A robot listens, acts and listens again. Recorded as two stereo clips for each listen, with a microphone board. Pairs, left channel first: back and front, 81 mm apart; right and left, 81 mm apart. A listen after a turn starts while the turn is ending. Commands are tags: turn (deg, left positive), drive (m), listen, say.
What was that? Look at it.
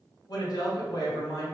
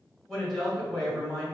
<turn deg="180"/>
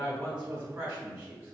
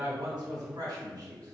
<turn deg="55"/>
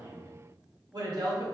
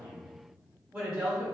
<turn deg="10"/>
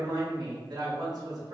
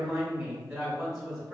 <say>Found it: a woman speaking, straight ahead.</say>